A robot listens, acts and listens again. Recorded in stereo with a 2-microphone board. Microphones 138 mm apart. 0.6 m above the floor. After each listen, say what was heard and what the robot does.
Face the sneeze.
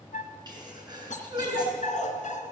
The sneeze: about 30° right or 150° right. Turn 30° right.
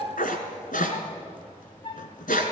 Keep listening.
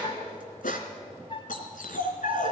I heard a sneeze, but can't make it out now. It was about straight ahead or 120° right.